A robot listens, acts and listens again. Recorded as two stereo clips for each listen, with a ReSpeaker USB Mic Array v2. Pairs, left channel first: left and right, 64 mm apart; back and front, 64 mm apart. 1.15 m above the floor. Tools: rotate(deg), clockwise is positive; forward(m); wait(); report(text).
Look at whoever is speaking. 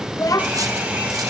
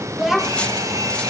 rotate(-85)
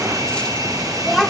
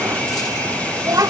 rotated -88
report("Facing the child speaking.")